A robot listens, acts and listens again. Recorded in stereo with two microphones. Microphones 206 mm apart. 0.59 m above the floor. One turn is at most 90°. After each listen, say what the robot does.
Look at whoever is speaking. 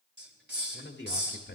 Turn 60° left.
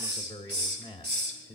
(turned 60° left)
Turn 30° left.
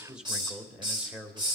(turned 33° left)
Facing the man speaking, 1 to 2 m away.